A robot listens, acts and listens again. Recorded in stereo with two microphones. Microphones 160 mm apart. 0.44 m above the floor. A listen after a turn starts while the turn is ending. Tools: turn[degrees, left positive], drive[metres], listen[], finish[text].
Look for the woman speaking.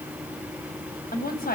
Thought: The woman speaking: about 65° left or 115° left.
Action: turn[65]
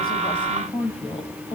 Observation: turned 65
Thought: So it is at 40° left.
Action: turn[40]
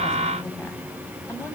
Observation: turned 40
Thought: The woman speaking is now 20° left.
Action: turn[20]
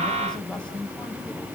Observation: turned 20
Thought: The woman speaking is now 10° left.
Action: turn[10]
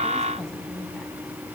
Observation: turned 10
Action: listen[]
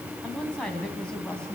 Action: finish[Facing the woman speaking.]